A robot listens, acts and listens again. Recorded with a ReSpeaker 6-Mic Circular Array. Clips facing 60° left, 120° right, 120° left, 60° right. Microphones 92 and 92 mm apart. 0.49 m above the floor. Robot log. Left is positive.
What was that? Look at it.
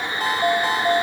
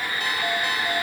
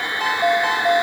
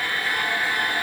note: The ringtone: 105° left.
cmd yaw +105
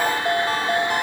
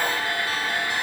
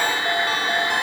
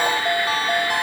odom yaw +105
note: The ringtone is now 15° left.
cmd yaw +15
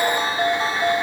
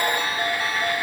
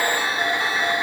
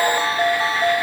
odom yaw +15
end: Facing the ringtone.